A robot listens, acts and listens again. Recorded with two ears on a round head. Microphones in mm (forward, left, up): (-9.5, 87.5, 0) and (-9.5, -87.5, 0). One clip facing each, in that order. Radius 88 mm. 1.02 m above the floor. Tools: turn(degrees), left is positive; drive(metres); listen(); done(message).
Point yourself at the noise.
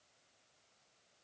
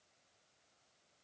listen()
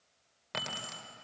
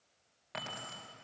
turn(degrees=60)
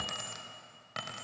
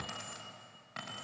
turn(degrees=55)
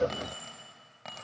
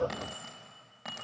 done("Found it: keys jangling, straight ahead.")